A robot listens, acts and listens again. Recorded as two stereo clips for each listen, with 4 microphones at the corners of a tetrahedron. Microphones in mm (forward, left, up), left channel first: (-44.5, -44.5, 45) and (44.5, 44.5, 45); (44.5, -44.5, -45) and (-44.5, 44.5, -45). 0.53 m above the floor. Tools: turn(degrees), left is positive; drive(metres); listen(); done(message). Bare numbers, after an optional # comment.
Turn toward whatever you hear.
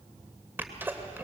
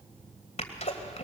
# The sneeze: 25° right.
turn(-25)
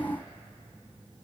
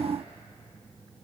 done("Facing where the sneeze came from. I can't hear it now.")